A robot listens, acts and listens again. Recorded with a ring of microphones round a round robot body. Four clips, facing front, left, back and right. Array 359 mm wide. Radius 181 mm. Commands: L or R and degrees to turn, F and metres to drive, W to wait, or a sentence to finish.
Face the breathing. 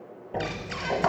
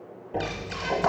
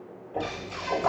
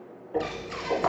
L30
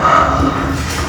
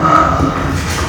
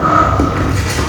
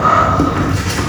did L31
Facing the breathing, under 1 m away.